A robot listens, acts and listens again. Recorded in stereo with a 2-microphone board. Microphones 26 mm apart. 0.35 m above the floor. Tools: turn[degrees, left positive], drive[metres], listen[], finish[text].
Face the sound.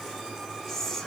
Action: turn[30]
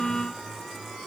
Action: listen[]
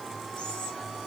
Action: listen[]
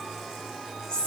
Thought: So it is at 135° left.
Action: turn[135]
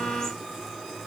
Action: listen[]
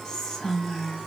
Thought: The whispering is now 35° left.
Action: turn[35]
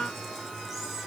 Action: listen[]
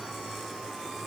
Action: listen[]
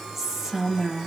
Action: finish[Facing the whispering.]